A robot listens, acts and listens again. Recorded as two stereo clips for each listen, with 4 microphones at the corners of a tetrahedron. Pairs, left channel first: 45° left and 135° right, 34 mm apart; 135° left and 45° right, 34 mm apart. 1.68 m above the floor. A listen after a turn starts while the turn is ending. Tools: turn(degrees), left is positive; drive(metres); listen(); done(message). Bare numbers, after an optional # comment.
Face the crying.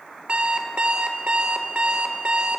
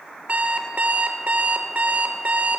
listen()
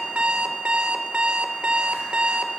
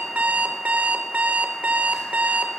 listen()
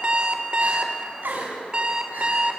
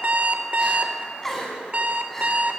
# The crying: 145° right.
turn(-145)
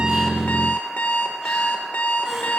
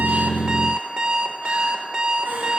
# The crying is now 50° right.
turn(-50)
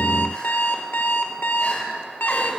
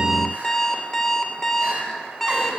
done("Facing the crying, over 4 m away.")